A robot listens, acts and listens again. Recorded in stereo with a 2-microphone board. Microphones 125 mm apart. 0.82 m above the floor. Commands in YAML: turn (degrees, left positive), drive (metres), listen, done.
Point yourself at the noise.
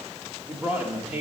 turn: -15
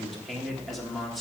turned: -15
done: "Found it: a man speaking, straight ahead."